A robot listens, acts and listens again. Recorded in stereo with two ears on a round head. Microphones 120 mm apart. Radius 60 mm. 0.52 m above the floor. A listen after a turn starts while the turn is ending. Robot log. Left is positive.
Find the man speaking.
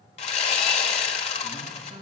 note: The man speaking: about 35° right or 145° right.
cmd yaw -35
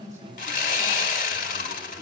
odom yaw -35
end: Facing the man speaking, over 4 m away.